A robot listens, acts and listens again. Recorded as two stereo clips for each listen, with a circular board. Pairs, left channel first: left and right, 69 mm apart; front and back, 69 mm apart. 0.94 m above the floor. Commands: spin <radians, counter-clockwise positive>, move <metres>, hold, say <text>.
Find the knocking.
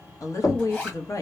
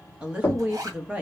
spin 1.05
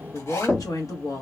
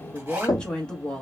spin 0.44
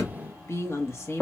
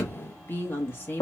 say Facing the knocking.